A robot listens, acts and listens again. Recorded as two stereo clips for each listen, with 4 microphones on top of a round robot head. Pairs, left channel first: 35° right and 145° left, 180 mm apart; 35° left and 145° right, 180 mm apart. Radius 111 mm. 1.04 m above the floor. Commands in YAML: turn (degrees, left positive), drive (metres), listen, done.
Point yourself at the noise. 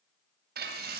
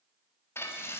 turn: 110
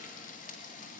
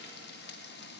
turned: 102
turn: 10
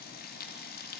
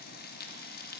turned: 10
done: "Found it: frying, straight ahead."